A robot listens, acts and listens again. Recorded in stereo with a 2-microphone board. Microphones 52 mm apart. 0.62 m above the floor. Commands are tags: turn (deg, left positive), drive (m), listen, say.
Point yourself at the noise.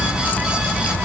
<listen/>
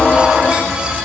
<listen/>
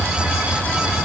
<say>I can't make out anything.</say>